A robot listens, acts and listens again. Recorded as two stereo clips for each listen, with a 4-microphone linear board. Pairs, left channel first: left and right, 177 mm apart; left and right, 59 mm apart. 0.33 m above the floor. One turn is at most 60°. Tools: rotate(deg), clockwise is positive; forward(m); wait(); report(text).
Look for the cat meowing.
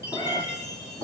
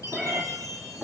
rotate(-20)
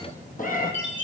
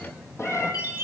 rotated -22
rotate(-60)
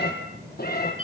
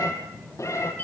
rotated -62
rotate(-55)
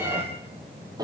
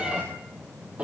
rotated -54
rotate(20)
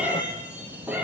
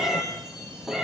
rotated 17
rotate(10)
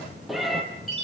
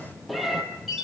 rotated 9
report("Found it: a cat meowing, straight ahead.")